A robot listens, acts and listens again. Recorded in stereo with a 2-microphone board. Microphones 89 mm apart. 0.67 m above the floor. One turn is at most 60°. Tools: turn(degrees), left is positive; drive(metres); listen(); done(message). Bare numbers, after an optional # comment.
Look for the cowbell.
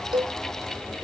# The cowbell: about 50° right or 130° right.
turn(-50)
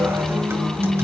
listen()
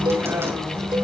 # So it is at 70° right.
turn(-60)
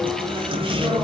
# Nothing new. It was at 10° right.
turn(-10)
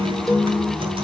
listen()
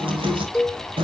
done("Facing the cowbell.")